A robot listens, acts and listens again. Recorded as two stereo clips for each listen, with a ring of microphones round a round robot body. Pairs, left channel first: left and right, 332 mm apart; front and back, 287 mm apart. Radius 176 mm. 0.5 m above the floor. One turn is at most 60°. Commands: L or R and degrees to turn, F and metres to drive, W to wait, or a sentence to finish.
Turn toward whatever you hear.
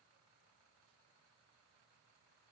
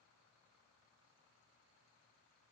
W
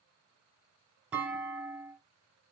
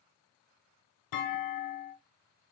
Facing the clunk.